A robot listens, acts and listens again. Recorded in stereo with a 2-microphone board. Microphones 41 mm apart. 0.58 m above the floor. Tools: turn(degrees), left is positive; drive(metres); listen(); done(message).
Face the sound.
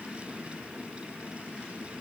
listen()
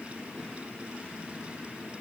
listen()
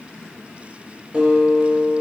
turn(degrees=-30)
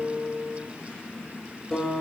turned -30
done("Facing the guitar, 2 to 4 m away.")